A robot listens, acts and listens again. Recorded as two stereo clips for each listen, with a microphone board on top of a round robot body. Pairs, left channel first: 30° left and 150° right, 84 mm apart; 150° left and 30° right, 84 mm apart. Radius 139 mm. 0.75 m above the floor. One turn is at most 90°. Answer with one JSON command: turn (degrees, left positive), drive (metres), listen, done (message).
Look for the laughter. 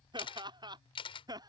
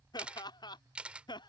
{"turn": 90}
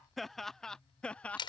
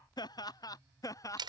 {"turn": 90}
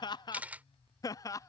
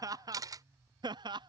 {"turn": -15}
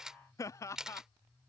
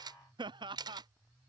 {"turn": -25}
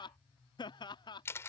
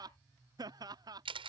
{"done": "Facing the laughter."}